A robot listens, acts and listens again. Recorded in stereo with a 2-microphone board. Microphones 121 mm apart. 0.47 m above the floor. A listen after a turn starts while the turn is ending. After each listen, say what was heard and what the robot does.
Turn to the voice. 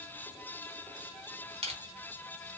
Keep listening.
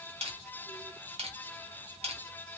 Keep listening.
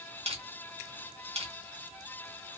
I can't make out anyone speaking to turn to.